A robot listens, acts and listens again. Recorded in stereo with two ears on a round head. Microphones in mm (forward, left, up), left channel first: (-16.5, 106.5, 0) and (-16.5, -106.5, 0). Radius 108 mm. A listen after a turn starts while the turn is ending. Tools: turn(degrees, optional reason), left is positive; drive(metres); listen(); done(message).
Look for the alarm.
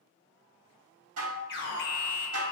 turn(degrees=50, reason="The alarm: about 50° left or 130° left.")
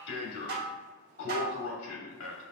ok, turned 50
turn(degrees=75, reason="So it is at 75° left.")
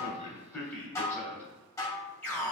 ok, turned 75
turn(degrees=10, reason="The alarm is now 10° left.")
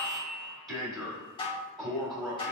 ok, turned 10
done("Found it: an alarm, straight ahead.")